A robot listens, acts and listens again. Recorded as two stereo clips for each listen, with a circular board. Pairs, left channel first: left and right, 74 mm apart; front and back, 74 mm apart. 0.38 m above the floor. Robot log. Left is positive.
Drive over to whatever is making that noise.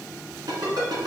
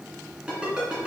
note: The ringtone: 105° right.
cmd yaw -105
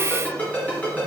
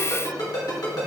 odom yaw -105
note: The ringtone is now 25° left.
cmd yaw +25
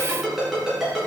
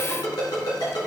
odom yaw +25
cmd fwd 1.0
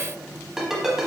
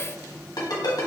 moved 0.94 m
cmd fwd 1.0
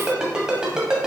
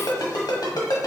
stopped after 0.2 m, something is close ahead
note: The ringtone is now 10° right.
cmd yaw -10
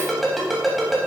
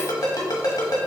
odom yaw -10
end: Arrived at the ringtone, straight ahead.